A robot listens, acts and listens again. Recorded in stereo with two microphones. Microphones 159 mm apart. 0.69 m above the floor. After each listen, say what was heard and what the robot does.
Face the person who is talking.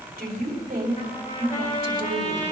The woman speaking: about 65° right or 115° right. Turn 65° right.
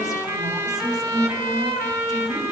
Facing the woman speaking.